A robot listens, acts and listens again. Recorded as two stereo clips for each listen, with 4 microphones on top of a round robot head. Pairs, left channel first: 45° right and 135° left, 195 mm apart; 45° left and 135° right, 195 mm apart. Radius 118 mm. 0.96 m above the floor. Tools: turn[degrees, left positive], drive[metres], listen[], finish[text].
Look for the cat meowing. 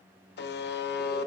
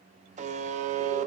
Action: listen[]
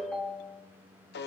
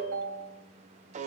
Action: listen[]
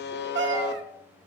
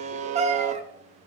Thought: The cat meowing: 165° left.
Action: turn[165]
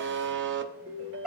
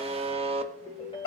Thought: The cat meowing is now 50° left.
Action: turn[50]
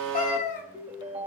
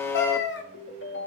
Thought: The cat meowing is now 10° left.
Action: turn[10]
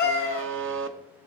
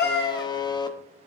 Action: finish[Found it: a cat meowing, straight ahead.]